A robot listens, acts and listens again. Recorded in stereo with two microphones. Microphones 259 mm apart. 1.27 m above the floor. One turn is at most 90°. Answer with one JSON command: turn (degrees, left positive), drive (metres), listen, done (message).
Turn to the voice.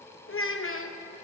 {"turn": 55}
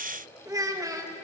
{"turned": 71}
{"turn": -15}
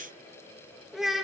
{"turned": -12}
{"done": "Found it: a child speaking, straight ahead, 1 to 2 m away."}